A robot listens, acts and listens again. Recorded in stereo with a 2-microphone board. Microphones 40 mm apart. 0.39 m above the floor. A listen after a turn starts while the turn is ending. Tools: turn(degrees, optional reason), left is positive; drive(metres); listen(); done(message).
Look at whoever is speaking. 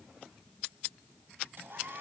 listen()
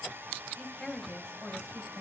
turn(degrees=30)
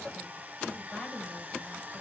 turn(degrees=140, reason="So it is at 140° left.")
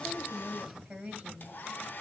turn(degrees=-25, reason="The woman speaking is now 25° right.")
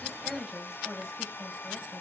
done("Facing the woman speaking.")